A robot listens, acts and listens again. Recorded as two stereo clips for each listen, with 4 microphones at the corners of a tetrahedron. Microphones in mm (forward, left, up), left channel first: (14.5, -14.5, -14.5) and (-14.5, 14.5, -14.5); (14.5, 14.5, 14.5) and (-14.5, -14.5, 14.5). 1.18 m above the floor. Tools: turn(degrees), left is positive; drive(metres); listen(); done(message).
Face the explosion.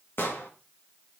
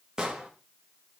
turn(degrees=-65)
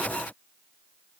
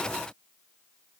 done("Facing where the explosion came from. I can't hear it now.")